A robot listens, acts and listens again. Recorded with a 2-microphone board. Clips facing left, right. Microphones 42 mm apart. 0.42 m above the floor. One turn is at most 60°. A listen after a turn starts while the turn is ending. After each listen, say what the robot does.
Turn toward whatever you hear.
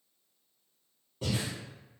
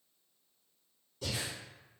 Turn 35° left.
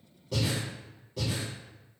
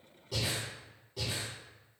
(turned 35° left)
Facing the breathing.